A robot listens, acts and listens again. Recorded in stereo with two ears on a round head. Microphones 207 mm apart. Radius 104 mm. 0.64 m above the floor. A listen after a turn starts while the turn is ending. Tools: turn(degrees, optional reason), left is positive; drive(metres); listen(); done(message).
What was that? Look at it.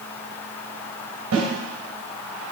turn(degrees=-90)
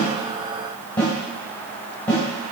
done("Found it: a snare drum, straight ahead.")